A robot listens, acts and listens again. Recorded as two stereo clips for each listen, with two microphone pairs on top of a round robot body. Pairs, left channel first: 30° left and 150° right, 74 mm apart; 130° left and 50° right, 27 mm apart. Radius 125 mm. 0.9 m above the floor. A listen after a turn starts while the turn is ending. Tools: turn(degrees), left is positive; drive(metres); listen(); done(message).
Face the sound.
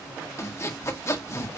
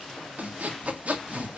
turn(degrees=-10)
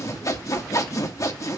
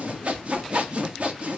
done("Facing the sawing, 1 to 2 m away.")